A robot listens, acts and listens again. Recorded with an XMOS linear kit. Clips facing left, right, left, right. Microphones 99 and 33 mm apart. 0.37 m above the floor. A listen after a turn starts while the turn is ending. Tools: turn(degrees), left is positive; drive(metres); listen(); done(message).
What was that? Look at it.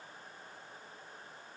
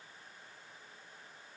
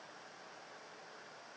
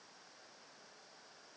listen()
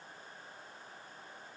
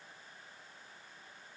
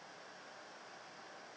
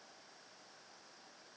listen()
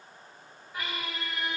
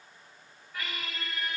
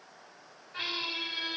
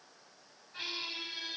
turn(degrees=20)
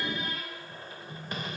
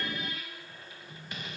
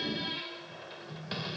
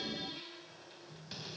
turn(degrees=140)
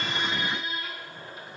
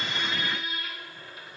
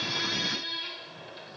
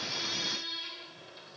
turn(degrees=35)
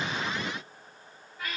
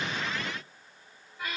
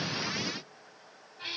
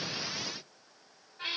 turn(degrees=-10)
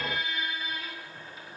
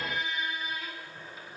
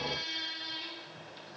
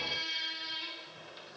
done("Facing the squeak.")